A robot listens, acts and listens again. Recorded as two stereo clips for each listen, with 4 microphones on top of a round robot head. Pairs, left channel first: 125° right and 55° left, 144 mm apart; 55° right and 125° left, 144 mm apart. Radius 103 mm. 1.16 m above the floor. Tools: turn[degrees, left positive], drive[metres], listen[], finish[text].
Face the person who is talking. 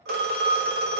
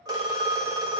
Action: listen[]
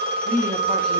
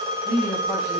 Thought: The woman speaking: 25° left.
Action: turn[25]
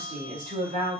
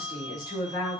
Thought: The woman speaking is now 10° left.
Action: turn[10]
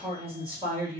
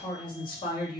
Action: finish[Facing the woman speaking.]